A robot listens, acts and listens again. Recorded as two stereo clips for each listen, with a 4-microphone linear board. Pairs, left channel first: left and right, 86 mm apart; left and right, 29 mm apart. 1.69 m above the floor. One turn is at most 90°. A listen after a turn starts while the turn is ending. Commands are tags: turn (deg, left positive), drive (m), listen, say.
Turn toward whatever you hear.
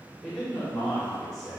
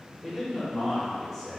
<turn deg="30"/>
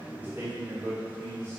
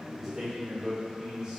<turn deg="-25"/>
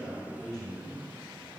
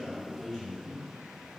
<say>Found it: a man speaking, straight ahead.</say>